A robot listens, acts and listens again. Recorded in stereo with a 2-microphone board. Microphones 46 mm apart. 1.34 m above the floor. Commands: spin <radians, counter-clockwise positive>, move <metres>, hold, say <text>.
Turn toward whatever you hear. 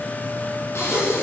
spin 1.22
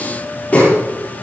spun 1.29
spin 0.61
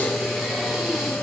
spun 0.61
say Found it: breathing, straight ahead, over 4 m away.